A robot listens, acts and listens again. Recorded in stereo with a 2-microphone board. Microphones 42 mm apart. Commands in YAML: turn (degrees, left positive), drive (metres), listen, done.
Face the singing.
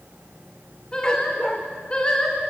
turn: 25
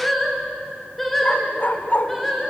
done: "Found it: singing, straight ahead."